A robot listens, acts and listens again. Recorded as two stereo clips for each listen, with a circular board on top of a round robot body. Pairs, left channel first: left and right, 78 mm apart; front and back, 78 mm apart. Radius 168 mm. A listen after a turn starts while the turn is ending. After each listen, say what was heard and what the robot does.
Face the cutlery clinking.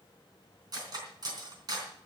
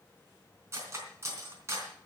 The cutlery clinking: 125° right. Turn 125° right.
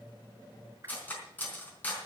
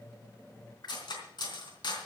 The cutlery clinking is now 20° left. Turn 20° left.
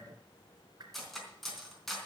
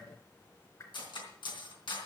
Facing the cutlery clinking, 2 to 4 m away.